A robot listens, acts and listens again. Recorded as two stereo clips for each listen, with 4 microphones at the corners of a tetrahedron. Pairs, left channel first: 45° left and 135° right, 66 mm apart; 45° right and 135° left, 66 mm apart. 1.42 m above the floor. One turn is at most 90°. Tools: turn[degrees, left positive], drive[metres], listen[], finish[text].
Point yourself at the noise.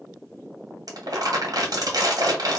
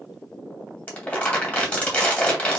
Thought: The crumpling: 110° right.
Action: turn[-90]
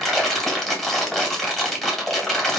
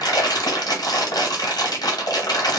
Thought: The crumpling is now 35° right.
Action: turn[-35]
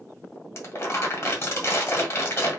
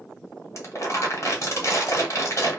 Action: finish[Facing the crumpling, 1 to 2 m away.]